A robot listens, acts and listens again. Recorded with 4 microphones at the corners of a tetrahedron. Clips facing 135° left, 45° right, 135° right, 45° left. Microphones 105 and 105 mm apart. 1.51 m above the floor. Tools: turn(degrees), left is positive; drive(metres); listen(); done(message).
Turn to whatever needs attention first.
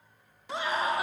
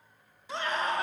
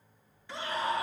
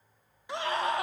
turn(degrees=55)
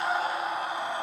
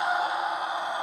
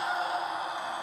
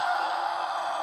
turn(degrees=25)
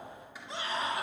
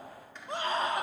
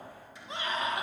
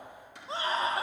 turn(degrees=-10)
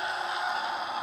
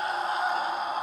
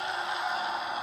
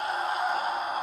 done("Found it: a scream, straight ahead, 1 to 2 m away.")